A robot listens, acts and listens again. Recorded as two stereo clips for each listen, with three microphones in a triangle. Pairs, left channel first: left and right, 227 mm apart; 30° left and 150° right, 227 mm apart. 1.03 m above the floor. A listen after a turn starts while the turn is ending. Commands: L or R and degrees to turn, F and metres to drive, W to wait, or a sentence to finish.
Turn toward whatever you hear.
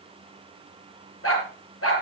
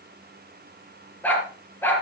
L110
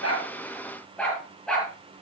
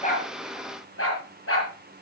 Found it: a dog barking, straight ahead, over 4 m away.